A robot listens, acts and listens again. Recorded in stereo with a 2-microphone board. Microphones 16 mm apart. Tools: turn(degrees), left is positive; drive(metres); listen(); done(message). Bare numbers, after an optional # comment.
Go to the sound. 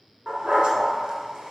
# The dog barking: about 55° right or 125° right.
turn(-55)
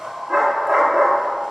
# So it is at 70° right.
turn(-70)
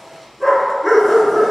# The dog barking is now 15° right.
turn(-15)
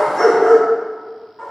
drive(1.0)
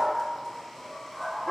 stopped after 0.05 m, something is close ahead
done("Something is in my way. I am facing the dog barking but have not reached it.")